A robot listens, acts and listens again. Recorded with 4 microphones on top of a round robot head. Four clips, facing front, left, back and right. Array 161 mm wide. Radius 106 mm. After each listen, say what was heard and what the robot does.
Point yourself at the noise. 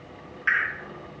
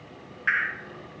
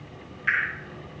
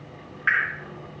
The dripping: 80° right. Turn 80° right.
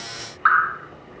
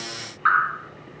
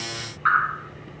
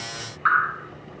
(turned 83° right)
Found it: dripping, straight ahead.